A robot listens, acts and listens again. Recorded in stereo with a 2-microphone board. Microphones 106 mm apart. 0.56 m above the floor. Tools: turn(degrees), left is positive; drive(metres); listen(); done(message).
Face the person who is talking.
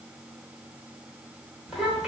turn(degrees=-30)
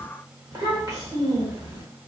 turn(degrees=-145)
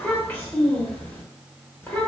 turn(degrees=15)
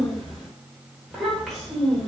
done("Found it: a child speaking, straight ahead.")